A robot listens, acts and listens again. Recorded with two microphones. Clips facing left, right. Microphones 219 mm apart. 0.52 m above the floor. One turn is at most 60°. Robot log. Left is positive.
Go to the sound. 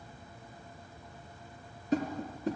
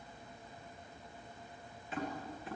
note: The tapping: about 40° left or 140° left.
cmd yaw +40
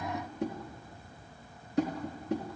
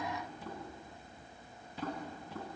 note: So it is at 100° left.
cmd yaw +60
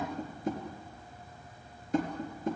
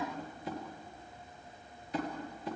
note: The tapping is now 45° left.
cmd yaw +45
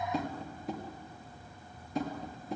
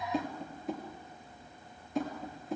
cmd fwd 1.0
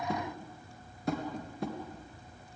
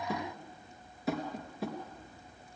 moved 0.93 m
cmd fwd 1.0
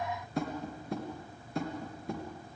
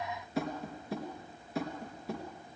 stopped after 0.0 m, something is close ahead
end: Something is in my way. I am facing the tapping but have not reached it.